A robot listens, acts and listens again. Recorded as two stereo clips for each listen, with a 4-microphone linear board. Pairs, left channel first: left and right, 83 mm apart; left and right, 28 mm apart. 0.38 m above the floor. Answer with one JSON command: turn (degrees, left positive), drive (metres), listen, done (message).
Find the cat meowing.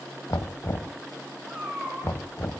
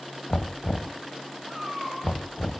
{"turn": -30}
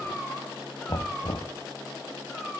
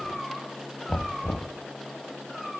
{"done": "Facing the cat meowing, over 4 m away."}